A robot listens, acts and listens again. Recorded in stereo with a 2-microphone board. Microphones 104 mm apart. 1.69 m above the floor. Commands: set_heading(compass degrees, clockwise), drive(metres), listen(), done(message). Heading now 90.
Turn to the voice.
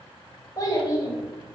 set_heading(60)
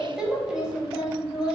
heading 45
set_heading(55)
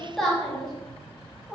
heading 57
done("Facing the child speaking.")